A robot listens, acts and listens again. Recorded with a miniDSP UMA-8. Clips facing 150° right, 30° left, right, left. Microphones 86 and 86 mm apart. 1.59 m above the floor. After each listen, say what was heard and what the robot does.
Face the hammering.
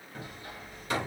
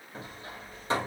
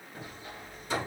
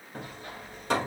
The hammering: 85° left. Turn 85° left.
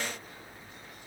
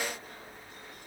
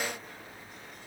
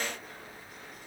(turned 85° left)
Keep listening.
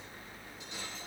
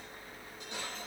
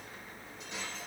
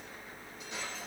Keep listening.
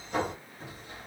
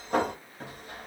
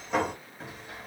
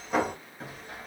Found it: hammering, straight ahead, 1 to 2 m away.